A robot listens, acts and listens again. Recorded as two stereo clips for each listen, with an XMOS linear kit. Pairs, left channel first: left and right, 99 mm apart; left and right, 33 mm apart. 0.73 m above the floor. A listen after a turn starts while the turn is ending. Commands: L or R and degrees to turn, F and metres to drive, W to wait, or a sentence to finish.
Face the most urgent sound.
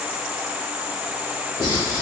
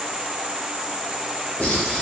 W
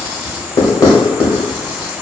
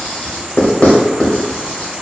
W
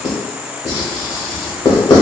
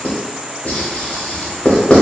I can't make out anything urgent to turn to.